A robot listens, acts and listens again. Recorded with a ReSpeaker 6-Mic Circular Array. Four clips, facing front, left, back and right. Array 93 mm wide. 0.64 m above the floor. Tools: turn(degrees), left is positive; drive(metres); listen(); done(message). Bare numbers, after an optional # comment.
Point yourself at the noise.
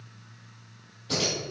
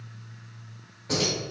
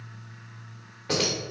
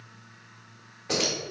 # The keys jangling: 165° right.
turn(-165)
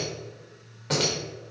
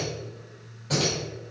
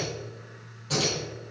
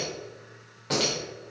# The keys jangling is now 30° right.
turn(-30)
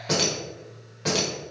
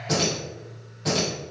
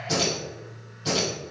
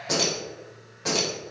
# The keys jangling is now 15° right.
turn(-15)
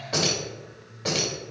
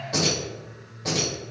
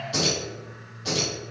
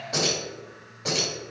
done("Found it: keys jangling, straight ahead, 2 to 4 m away.")